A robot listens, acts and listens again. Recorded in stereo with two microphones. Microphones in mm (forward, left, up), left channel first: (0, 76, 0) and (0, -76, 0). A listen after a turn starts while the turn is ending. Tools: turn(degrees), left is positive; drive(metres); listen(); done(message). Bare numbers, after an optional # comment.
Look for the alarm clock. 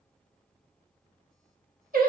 listen()
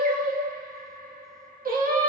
listen()
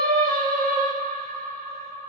done("I can't make out an alarm clock to turn to.")